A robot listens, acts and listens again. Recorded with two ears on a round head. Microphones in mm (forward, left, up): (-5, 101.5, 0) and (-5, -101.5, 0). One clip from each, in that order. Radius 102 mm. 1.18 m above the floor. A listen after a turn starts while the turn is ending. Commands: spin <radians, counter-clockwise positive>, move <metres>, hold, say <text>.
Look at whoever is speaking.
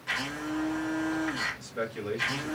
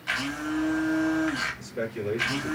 spin 0.52
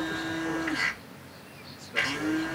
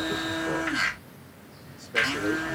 hold
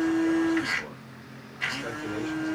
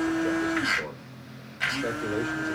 hold
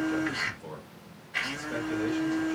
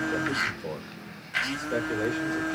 say Facing the man speaking.